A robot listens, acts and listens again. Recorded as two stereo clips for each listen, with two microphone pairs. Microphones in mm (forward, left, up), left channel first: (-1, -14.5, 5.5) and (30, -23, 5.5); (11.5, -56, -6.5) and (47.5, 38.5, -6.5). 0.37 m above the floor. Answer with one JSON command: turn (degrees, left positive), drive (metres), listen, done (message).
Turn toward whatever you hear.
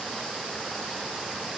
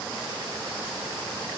{"listen": true}
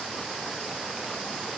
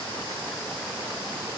{"listen": true}
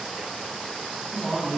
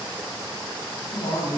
{"turn": -120}
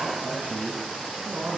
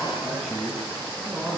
{"turn": -15}
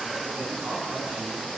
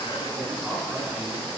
{"turn": -10}
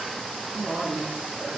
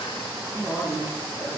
{"done": "Found it: a man speaking, straight ahead, 2 to 4 m away."}